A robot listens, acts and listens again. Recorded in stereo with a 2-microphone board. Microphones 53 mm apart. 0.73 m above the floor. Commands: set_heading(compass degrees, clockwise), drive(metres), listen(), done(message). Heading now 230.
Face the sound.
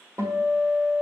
set_heading(290)
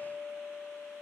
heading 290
done("Found it: a guitar, straight ahead.")